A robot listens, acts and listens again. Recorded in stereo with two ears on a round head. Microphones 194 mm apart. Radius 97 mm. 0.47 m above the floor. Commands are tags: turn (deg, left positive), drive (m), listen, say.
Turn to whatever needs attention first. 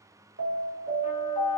<turn deg="-60"/>
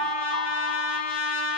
<turn deg="-15"/>
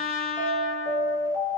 <say>Found it: an alarm, straight ahead.</say>